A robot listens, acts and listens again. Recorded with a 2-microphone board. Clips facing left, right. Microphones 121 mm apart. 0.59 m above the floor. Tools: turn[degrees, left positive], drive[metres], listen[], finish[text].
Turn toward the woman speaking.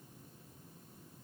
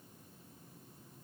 Action: listen[]
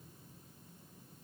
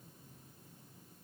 Action: listen[]
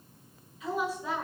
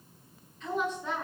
Action: turn[30]
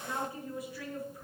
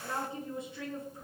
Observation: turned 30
Thought: So it is at 25° right.
Action: turn[-25]
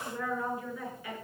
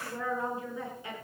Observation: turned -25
Thought: The woman speaking is now 25° right.
Action: turn[-25]
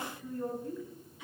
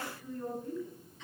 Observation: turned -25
Thought: The woman speaking is now 10° left.
Action: turn[10]
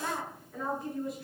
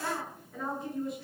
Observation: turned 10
Action: finish[Facing the woman speaking, over 4 m away.]